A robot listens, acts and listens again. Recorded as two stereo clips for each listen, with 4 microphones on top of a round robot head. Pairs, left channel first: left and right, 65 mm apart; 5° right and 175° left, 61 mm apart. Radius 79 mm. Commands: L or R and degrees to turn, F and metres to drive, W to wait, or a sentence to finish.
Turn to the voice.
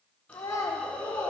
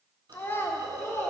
L45
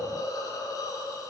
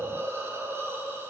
W
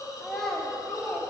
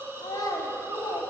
Facing the child speaking, 1 to 2 m away.